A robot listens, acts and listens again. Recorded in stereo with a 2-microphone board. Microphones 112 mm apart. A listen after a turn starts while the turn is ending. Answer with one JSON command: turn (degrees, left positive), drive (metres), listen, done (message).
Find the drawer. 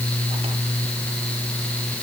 {"listen": true}
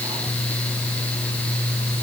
{"listen": true}
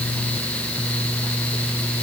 {"done": "I can't make out a drawer to turn to."}